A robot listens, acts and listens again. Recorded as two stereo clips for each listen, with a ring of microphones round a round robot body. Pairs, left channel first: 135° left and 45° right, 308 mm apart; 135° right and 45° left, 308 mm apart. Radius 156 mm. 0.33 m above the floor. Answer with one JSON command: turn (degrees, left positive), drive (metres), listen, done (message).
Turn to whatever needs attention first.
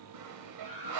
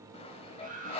{"turn": -20}
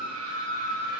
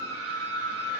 {"done": "Facing the scream."}